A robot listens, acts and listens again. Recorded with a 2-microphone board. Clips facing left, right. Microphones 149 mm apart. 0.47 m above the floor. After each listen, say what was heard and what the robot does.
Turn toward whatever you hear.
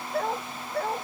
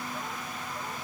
Turn 90° left.
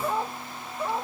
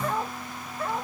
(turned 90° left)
So it is at 15° left. Turn 15° left.
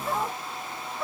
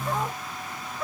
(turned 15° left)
Found it: a dog barking, straight ahead.